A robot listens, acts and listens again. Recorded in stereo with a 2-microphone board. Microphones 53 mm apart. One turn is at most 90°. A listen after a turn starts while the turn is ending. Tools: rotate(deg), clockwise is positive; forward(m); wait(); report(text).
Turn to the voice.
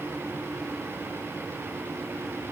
wait()
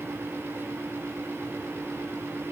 wait()
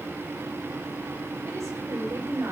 rotate(90)
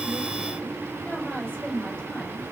rotate(-15)
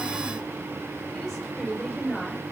report("Found it: a woman speaking, straight ahead.")